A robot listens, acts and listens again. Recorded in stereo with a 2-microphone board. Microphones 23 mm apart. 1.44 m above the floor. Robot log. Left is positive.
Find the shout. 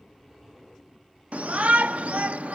note: The shout: about 75° right or 105° right.
cmd yaw -75
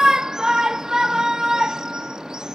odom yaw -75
note: So it is at 30° right.
cmd yaw -30
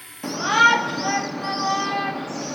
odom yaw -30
end: Found it: a shout, straight ahead.